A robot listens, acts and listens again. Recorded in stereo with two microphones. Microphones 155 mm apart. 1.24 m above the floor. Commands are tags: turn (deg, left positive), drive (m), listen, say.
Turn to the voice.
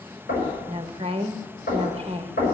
<turn deg="-35"/>
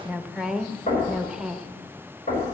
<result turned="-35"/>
<say>Facing the woman speaking, under 1 m away.</say>